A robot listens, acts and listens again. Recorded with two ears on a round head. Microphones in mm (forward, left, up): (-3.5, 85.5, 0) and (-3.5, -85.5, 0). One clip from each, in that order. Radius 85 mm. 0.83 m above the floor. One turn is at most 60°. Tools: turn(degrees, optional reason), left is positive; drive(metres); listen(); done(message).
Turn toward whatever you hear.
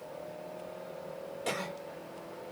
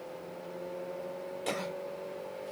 turn(degrees=30)
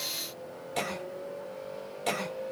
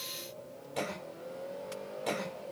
turn(degrees=60, reason="So it is at 150° left.")
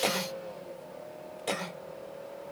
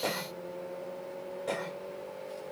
turn(degrees=60, reason="The cough is now 90° left.")
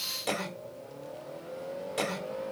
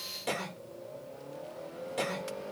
turn(degrees=15, reason="The cough is now 15° left.")
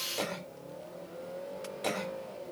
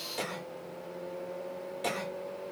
done("Facing the cough.")